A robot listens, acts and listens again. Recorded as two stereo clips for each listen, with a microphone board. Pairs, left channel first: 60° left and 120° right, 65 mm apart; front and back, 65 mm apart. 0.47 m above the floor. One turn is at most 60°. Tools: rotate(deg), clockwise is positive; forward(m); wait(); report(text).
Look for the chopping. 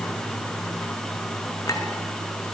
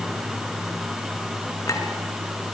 wait()
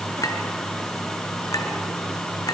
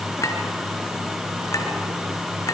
wait()
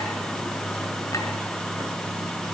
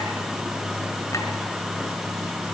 report("I can't make out chopping.")